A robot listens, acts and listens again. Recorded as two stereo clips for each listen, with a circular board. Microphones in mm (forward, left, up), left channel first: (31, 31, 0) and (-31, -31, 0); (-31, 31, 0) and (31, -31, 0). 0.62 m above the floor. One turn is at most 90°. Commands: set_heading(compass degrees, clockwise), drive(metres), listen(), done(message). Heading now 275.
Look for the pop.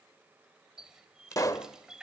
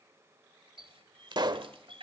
done("Found it: a pop, straight ahead, under 1 m away.")